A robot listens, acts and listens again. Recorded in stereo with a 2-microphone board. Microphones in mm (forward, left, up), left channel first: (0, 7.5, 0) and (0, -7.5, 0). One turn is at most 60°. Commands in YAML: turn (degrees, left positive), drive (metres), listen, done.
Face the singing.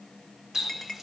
listen: true
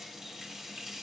listen: true
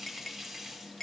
done: "I can't make out singing to turn to."